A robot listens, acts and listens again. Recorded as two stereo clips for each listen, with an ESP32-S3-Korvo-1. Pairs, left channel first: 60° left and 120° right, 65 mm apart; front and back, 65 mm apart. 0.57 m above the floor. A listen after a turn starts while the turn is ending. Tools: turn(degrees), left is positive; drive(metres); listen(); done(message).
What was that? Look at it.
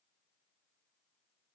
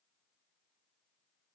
listen()
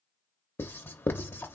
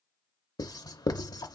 done("Found it: writing, straight ahead, under 1 m away.")